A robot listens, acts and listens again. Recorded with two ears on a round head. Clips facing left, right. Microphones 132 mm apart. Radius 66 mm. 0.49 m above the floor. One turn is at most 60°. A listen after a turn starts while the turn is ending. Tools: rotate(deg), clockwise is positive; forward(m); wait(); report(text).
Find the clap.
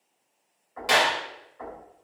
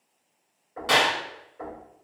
rotate(-30)
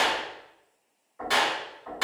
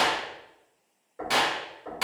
rotate(15)
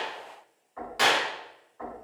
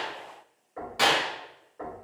report("Facing the clap.")